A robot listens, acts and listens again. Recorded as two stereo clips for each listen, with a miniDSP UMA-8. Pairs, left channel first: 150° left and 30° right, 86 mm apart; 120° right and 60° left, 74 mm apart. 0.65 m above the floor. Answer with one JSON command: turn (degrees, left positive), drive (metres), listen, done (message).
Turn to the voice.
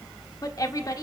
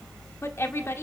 {"turn": -170}
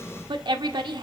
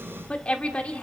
{"turn": -45}
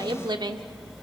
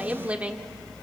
{"turn": -10}
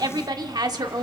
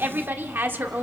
{"done": "Found it: a woman speaking, straight ahead."}